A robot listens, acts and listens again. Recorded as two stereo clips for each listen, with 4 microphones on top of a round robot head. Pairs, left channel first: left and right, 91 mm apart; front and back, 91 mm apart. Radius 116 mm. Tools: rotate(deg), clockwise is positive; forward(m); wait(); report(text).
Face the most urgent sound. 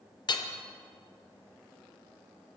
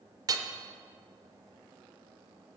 wait()
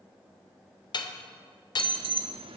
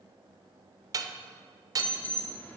rotate(75)
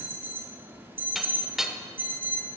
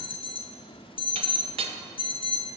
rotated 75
rotate(20)
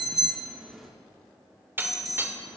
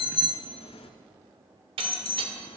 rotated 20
report("Found it: an alarm, straight ahead.")